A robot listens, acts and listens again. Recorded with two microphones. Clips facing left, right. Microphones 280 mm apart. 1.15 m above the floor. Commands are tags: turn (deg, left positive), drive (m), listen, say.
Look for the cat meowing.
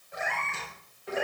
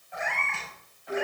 <turn deg="45"/>
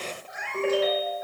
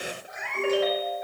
<say>Facing the cat meowing.</say>